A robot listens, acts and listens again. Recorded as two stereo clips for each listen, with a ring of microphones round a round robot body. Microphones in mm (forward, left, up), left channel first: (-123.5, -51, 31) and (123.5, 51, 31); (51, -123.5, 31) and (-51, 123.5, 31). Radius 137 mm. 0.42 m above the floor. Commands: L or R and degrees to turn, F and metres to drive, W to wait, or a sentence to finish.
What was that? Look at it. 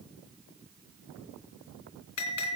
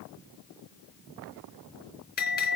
R125
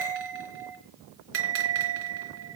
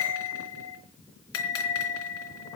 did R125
R25
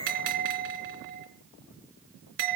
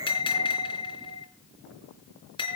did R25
Found it: a bell, straight ahead.